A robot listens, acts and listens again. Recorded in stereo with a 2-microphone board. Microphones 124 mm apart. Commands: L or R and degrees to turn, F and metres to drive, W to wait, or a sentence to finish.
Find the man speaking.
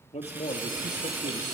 L60
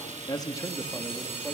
L10
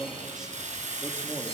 Found it: a man speaking, straight ahead.